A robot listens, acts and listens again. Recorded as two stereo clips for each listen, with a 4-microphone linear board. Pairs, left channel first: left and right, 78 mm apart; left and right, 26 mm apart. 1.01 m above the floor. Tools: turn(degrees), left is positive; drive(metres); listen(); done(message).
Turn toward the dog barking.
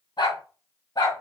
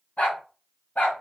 turn(degrees=70)
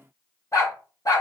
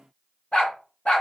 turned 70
turn(degrees=50)
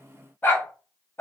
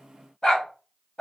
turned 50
turn(degrees=30)
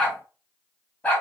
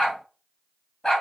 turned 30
turn(degrees=20)
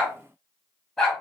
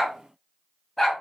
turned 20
done("Found it: a dog barking, straight ahead.")